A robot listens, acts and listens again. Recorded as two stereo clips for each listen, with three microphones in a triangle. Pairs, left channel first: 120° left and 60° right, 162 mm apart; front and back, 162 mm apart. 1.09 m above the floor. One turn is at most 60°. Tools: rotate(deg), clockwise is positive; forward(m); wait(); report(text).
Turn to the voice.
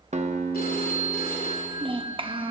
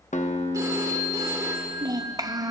rotate(60)
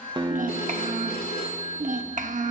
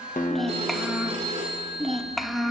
rotate(60)
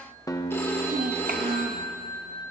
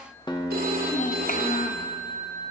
rotate(30)
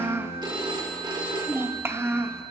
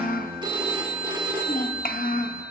rotate(-15)
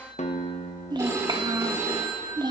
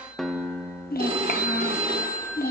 report("Found it: a child speaking, straight ahead.")